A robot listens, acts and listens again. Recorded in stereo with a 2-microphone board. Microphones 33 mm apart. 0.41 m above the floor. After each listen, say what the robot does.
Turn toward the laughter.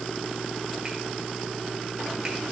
Keep listening.
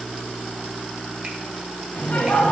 Turn 50° left.
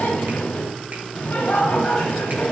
Turn 70° left.
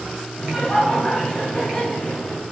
Turn 10° left.
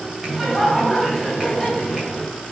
Facing the laughter.